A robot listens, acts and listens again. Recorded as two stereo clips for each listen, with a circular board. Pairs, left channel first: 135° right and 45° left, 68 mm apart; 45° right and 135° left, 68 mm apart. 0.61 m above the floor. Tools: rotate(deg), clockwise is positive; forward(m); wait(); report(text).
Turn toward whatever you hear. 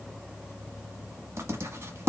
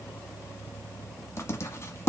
report("Found it: writing, straight ahead.")